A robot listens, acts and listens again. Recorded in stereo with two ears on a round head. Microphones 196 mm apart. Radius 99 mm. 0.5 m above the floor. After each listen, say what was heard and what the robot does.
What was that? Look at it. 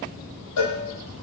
Turn 90° left.
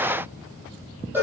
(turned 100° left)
So it is at 10° right. Turn 10° right.
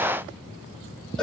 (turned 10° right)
Facing the cowbell, over 4 m away.